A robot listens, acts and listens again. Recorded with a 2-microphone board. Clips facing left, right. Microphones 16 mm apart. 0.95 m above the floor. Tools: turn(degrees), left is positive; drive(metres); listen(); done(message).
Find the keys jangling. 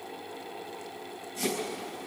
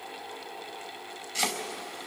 listen()
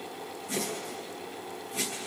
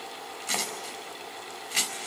listen()
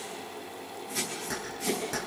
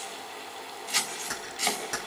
turn(degrees=-20)
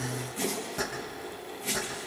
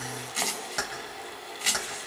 turn(degrees=-130)
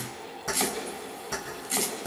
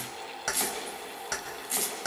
turn(degrees=-45)
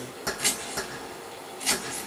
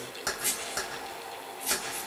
turn(degrees=-15)
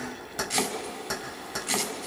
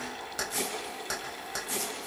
done("Facing the keys jangling.")